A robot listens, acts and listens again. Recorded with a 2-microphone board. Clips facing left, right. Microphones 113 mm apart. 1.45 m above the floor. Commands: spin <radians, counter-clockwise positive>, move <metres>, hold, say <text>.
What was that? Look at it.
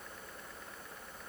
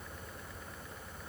hold
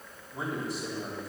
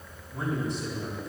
spin 0.52
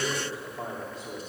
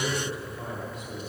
spin 2.53
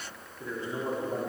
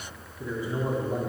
spin -0.17
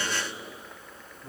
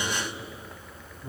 say Found it: a man speaking, straight ahead.